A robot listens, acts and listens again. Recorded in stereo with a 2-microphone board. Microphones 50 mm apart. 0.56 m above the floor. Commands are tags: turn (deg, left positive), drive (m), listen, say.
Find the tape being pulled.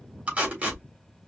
<turn deg="-25"/>
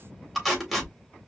<say>Facing the tape being pulled, 2 to 4 m away.</say>